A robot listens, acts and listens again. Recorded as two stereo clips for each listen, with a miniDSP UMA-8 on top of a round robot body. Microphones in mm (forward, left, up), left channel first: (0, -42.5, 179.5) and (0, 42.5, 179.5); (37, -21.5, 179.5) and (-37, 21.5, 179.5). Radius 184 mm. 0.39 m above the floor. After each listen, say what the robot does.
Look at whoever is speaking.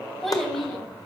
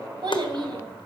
Turn 175° right.
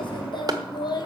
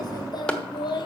Turn 55° right.
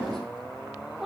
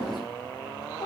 Found it: a child speaking, straight ahead, 1 to 2 m away.